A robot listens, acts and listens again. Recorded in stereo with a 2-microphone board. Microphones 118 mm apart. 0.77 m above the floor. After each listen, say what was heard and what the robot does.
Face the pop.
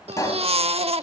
The pop: about 30° left or 150° left. Turn 30° left.
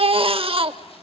Keep listening.
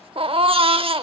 I heard a pop, but can't make it out now. It was about straight ahead or 120° left.